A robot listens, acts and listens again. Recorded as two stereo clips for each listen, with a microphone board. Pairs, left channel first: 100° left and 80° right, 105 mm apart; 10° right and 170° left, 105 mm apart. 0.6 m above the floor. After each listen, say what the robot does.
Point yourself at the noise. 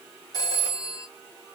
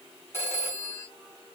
Turn 55° left.
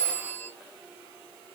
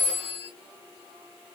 Turn 20° left.
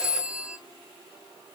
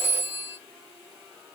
Turn 10° left.
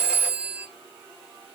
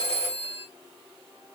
Facing the phone ringing.